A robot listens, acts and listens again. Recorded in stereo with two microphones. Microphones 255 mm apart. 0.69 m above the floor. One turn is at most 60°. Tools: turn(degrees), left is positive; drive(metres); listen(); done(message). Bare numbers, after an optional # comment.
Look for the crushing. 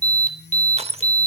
# The crushing: about 25° right or 155° right.
turn(-25)
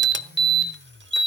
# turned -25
listen()
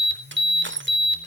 # So it is at 130° right.
turn(-60)
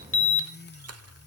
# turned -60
# Nothing new. It was at 70° right.
turn(-60)
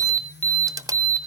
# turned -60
# The crushing is now 15° right.
turn(-15)
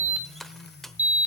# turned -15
done("Facing the crushing.")